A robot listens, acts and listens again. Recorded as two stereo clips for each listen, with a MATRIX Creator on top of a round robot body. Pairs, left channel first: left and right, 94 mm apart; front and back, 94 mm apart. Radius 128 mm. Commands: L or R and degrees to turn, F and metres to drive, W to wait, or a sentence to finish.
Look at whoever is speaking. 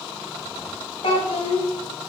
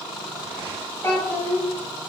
L70
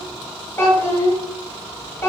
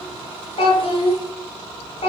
L25
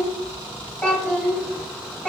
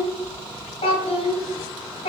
Facing the child speaking.